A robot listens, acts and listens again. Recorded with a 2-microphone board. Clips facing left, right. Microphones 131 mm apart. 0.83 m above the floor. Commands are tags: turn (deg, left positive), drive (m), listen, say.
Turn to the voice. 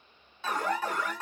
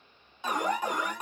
<listen/>
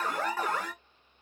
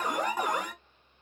<listen/>
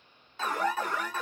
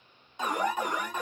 <say>I can't make out anyone speaking to turn to.</say>